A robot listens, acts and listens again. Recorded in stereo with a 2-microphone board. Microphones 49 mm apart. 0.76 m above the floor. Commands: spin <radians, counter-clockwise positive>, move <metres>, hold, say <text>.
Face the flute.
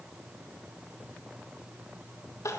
hold
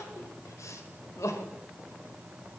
hold
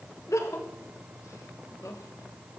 say I can't make out a flute to turn to.